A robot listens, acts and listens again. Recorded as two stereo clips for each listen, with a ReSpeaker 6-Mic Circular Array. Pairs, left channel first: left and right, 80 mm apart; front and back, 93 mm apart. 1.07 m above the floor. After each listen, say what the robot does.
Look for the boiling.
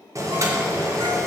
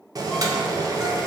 Turn 135° right.
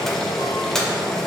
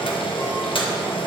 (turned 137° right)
Found it: boiling, straight ahead.